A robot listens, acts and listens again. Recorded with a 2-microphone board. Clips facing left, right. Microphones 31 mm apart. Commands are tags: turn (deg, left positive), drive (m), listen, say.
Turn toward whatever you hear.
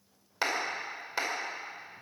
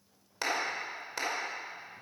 <turn deg="20"/>
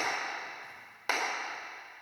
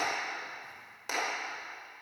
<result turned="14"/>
<turn deg="145"/>
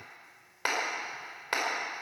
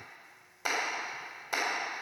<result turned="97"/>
<turn deg="45"/>
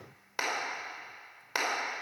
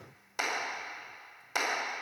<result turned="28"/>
<turn deg="20"/>
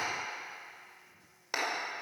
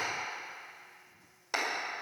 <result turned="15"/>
<say>Found it: a clap, straight ahead, over 4 m away.</say>